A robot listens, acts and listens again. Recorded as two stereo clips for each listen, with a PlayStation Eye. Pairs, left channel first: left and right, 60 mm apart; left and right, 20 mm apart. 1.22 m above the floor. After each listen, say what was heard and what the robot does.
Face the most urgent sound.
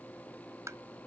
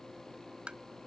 Keep listening.
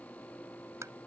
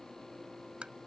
Keep listening.
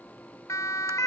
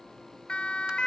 The siren: about 60° left or 120° left. Turn 60° left.
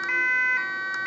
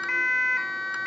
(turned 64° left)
Found it: a siren, straight ahead.